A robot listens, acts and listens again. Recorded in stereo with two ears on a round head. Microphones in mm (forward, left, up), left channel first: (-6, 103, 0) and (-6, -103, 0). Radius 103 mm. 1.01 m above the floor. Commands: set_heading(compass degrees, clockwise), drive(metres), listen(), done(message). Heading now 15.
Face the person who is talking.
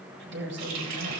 set_heading(70)
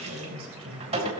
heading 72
set_heading(137)
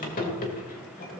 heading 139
listen()
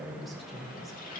done("Found it: a woman speaking, straight ahead, over 4 m away.")